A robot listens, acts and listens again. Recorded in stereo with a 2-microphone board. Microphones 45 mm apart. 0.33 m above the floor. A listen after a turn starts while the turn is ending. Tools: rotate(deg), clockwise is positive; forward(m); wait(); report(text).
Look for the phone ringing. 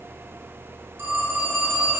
rotate(65)
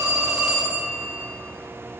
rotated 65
rotate(20)
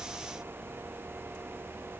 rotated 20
wait()
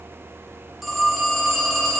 report("Facing the phone ringing.")